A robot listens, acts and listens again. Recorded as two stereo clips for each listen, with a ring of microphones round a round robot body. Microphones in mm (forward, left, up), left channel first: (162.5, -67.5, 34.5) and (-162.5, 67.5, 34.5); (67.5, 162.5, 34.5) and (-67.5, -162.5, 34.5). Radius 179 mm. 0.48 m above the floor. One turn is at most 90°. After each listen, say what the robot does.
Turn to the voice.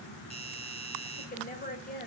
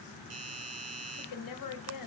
Turn 40° left.
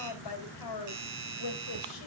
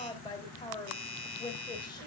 Turn 10° right.
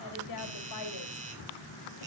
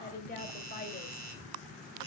Found it: a woman speaking, straight ahead.